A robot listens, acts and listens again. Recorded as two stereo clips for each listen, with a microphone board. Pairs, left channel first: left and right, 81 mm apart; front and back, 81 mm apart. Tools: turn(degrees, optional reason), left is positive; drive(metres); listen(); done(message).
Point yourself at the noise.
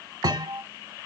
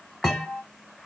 turn(degrees=-80, reason="The thud: 80° right.")
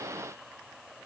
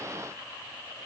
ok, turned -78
done("Facing where the thud came from. I can't hear it now.")